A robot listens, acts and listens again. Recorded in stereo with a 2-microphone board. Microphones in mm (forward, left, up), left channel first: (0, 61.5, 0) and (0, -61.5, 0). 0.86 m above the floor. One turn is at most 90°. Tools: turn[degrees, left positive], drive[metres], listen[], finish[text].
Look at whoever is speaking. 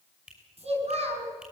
Thought: The child speaking: about 55° right or 125° right.
Action: turn[-55]
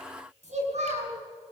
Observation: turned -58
Thought: So it is at 65° right.
Action: turn[-65]
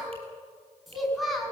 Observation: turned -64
Action: finish[Facing the child speaking.]